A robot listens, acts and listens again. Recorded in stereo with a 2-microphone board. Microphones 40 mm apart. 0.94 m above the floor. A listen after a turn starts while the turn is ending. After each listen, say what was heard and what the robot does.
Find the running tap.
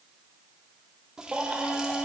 The running tap: about 20° right or 160° right. Turn 20° right.
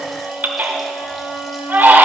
Keep listening.
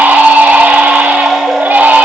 Keep listening.
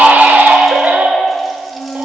I heard a running tap, but can't make it out now. It was about straight ahead or 140° right.